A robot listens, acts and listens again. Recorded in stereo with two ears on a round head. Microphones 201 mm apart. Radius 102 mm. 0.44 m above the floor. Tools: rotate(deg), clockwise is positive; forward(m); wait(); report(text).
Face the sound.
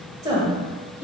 rotate(30)
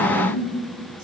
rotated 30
rotate(155)
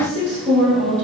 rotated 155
rotate(35)
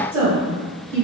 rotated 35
rotate(20)
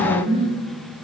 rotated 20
rotate(10)
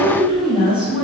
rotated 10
report("Found it: a woman speaking, straight ahead, 1 to 2 m away.")